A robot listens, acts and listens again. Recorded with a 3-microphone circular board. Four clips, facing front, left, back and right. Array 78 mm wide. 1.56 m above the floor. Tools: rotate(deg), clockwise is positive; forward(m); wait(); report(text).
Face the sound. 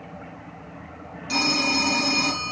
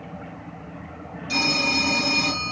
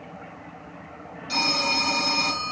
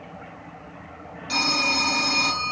rotate(50)
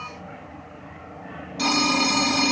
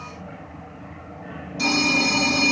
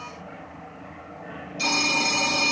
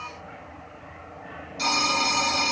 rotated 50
report("Found it: a phone ringing, straight ahead, 1 to 2 m away.")